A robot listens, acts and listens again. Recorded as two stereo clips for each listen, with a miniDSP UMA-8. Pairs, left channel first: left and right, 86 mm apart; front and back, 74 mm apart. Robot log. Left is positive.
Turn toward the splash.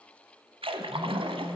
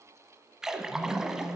note: The splash: 95° right.
cmd yaw -95
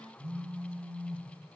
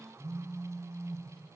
end: I heard a splash from this way, but can't make it out now.